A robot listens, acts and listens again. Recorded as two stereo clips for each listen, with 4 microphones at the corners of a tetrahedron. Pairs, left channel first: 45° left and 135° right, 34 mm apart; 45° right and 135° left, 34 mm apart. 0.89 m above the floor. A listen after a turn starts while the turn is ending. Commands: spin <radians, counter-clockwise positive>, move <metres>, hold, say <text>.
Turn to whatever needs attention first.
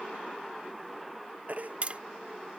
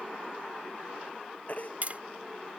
spin -1.57
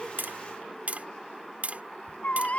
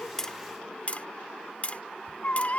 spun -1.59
say Found it: a baby crying, straight ahead.